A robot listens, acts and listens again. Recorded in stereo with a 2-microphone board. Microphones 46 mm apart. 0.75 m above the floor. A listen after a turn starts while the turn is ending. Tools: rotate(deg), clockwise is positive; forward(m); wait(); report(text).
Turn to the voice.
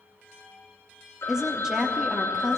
rotate(30)
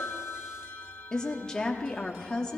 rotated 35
rotate(-20)
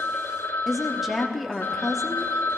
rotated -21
report("Found it: a woman speaking, straight ahead.")